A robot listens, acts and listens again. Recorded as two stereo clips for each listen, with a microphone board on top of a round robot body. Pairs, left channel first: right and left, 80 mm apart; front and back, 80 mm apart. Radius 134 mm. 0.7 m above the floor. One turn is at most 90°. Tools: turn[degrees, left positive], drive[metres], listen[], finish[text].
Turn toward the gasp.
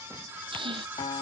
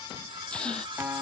Thought: The gasp: 80° left.
Action: turn[80]
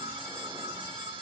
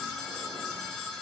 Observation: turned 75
Action: finish[Facing where the gasp came from. I can't hear it now.]